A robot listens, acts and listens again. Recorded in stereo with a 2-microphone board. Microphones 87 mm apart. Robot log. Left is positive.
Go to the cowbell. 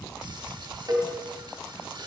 note: The cowbell: about 50° right or 130° right.
cmd yaw -50
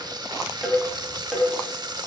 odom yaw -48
cmd fwd 1.0
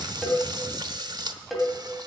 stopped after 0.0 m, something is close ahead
end: Something is in my way. I am facing the cowbell but have not reached it.